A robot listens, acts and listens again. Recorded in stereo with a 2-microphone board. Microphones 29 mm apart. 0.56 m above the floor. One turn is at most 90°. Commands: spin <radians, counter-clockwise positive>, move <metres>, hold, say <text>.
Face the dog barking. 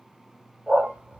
spin -1.13
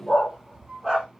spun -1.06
say Facing the dog barking, over 4 m away.